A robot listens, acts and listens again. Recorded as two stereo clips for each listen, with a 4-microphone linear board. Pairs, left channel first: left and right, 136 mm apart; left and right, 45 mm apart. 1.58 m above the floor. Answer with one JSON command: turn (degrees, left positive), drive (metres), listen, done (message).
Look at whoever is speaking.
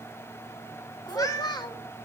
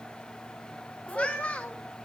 {"turn": 30}
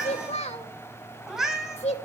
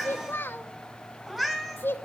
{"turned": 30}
{"turn": 110}
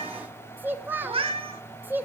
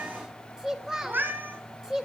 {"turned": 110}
{"turn": -15}
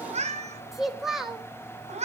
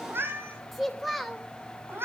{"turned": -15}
{"done": "Found it: a child speaking, straight ahead."}